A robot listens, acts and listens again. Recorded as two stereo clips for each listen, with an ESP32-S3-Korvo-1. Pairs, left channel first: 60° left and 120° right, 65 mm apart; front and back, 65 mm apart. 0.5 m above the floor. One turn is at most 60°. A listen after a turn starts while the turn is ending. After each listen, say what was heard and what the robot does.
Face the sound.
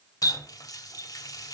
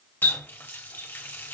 The running tap: 55° left. Turn 55° left.
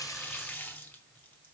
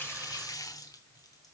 Found it: a running tap, straight ahead.